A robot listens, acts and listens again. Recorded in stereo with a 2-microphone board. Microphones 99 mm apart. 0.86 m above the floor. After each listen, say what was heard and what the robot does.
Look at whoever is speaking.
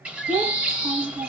The child speaking: about 70° right or 110° right. Turn 70° right.
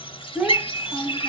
So it is at 10° right. Turn 10° right.
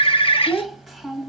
Found it: a child speaking, straight ahead.